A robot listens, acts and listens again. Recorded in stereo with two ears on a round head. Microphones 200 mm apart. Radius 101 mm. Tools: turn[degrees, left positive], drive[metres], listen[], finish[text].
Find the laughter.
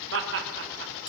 Thought: The laughter: about 60° right or 120° right.
Action: turn[-60]
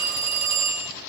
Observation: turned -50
Action: listen[]
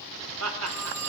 Thought: So it is at 65° right.
Action: turn[-65]
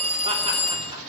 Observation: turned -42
Thought: Nothing new. It was at 25° right.
Action: turn[-25]
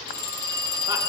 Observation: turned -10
Thought: Nothing new. It was at 15° right.
Action: turn[-15]
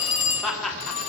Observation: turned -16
Action: finish[Found it: laughter, straight ahead, 2 to 4 m away.]